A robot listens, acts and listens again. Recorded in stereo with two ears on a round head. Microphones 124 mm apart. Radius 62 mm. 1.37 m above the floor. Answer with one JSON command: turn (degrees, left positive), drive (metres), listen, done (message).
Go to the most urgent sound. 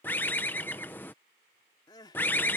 {"turn": 30}
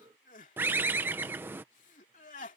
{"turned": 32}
{"turn": 120}
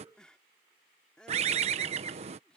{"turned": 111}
{"drive": 1.0}
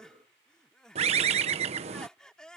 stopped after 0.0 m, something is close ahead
{"done": "Blocked. The crying is further on, straight ahead."}